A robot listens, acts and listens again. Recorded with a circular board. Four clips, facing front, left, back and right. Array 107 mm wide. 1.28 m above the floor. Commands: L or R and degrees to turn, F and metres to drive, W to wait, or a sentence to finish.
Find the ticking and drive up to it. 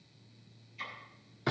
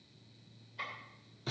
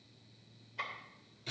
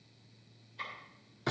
L170
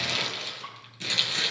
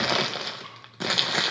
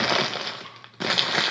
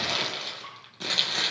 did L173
W
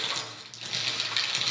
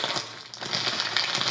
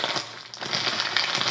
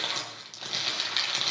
W
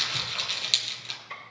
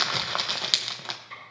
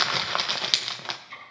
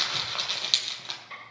F1.0
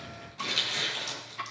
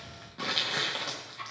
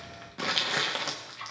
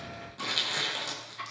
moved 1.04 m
R10
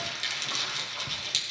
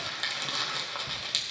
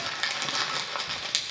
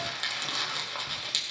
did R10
W
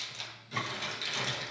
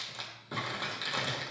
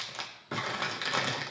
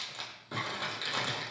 W
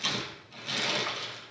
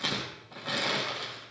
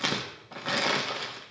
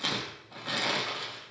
I heard ticking from this way, but can't make it out now. I did not reach it.